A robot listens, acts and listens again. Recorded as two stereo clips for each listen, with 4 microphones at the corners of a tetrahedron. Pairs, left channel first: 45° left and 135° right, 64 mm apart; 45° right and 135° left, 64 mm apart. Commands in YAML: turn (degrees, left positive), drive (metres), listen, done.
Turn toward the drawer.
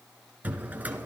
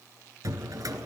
turn: 160
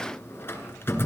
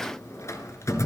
done: "Found it: a drawer, straight ahead."